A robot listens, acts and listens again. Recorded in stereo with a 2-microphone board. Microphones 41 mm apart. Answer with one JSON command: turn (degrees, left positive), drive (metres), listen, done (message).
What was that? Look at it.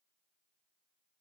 {"listen": true}
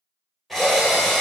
{"turn": 30}
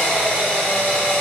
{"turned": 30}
{"turn": 145}
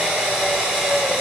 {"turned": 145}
{"turn": -30}
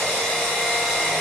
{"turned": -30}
{"turn": 15}
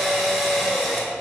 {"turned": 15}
{"done": "Facing the drill, 1 to 2 m away."}